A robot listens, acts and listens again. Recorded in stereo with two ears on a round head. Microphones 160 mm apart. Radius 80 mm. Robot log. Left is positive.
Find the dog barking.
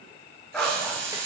cmd yaw +30
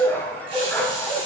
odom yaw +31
cmd yaw +30
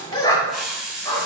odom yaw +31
note: So it is at 165° left.
cmd yaw +165
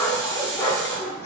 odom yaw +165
note: The dog barking is now 15° left.
cmd yaw +15
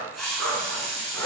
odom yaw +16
end: Found it: a dog barking, straight ahead.